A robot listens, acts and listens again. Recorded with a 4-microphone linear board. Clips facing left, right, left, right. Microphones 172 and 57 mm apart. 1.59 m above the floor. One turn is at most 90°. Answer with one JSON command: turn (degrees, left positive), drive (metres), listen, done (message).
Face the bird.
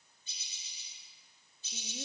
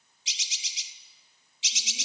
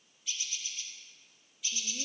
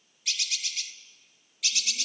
{"turn": -90}
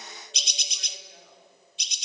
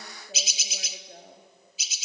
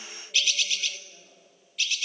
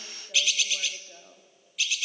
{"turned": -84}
{"done": "Found it: a bird, straight ahead, under 1 m away."}